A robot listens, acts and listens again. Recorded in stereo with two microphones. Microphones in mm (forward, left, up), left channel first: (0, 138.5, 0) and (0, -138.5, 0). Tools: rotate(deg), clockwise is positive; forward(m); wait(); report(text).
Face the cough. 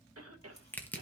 rotate(60)
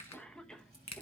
report("Found it: a cough, straight ahead, 1 to 2 m away.")